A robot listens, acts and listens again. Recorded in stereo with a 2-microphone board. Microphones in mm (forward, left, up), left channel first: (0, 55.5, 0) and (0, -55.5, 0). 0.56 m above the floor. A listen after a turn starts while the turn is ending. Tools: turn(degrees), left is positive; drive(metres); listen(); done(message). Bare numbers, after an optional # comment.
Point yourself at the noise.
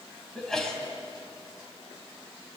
turn(30)
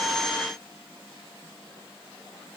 listen()
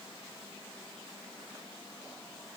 done("I heard a sneeze, but can't make it out now. It was about 25° right or 145° left.")